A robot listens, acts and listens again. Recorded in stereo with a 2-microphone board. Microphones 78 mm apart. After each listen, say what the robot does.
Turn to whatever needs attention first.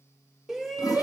Turn 30° right.
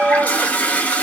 Turn 145° right.
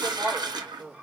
Keep listening.
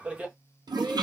Turn 20° right.
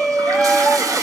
Facing the shout.